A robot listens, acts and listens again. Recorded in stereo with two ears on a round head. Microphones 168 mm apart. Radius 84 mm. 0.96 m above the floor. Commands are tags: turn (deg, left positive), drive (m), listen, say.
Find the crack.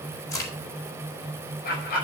<turn deg="15"/>
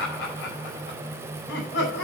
<listen/>
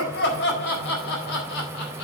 <say>I heard a crack, but can't make it out now. It was about straight ahead or 150° left.</say>